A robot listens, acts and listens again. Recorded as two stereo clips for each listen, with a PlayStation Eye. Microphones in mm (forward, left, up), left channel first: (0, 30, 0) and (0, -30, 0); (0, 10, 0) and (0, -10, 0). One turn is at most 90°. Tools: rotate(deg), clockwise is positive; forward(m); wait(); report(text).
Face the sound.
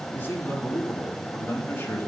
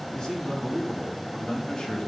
rotate(-40)
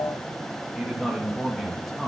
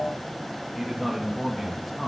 report("Facing the man speaking.")